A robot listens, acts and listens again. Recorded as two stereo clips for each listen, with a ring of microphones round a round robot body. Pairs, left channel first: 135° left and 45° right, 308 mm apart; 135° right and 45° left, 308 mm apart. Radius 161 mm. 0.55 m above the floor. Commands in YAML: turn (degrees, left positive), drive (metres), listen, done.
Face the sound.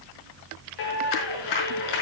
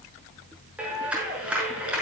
turn: 130
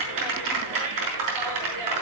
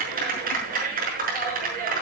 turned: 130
turn: -20
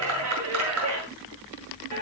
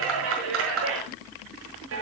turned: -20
done: "Facing the clap, over 4 m away."